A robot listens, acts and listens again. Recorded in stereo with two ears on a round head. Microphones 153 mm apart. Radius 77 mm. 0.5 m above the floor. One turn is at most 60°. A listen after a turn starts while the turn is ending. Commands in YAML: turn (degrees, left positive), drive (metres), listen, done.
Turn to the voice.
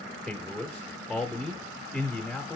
turn: 30
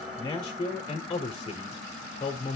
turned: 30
turn: 60
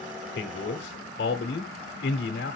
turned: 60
turn: 60
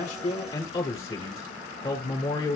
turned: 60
turn: 30
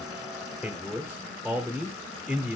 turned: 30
done: "Facing the man speaking."